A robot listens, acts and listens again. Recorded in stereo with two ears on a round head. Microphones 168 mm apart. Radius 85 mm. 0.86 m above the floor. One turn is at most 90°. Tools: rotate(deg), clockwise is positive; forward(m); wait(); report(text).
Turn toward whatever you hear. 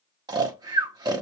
rotate(20)
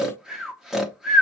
report("Facing the snoring, 1 to 2 m away.")